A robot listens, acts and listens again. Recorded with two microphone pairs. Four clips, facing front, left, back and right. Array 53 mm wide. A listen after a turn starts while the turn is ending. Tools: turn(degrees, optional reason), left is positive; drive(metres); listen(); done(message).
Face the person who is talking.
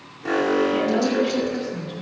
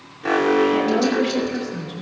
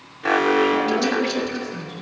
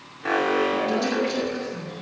turn(degrees=65, reason="The woman speaking: 65° left.")
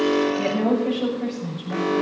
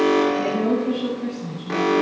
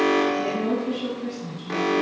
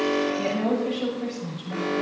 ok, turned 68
done("Found it: a woman speaking, straight ahead, over 4 m away.")